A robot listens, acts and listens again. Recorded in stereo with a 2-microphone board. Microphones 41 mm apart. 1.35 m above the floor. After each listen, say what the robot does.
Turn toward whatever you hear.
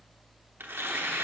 Turn 65° right.
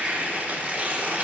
Turn 40° right.
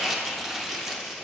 Turn 10° right.
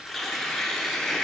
Found it: tearing paper, straight ahead, under 1 m away.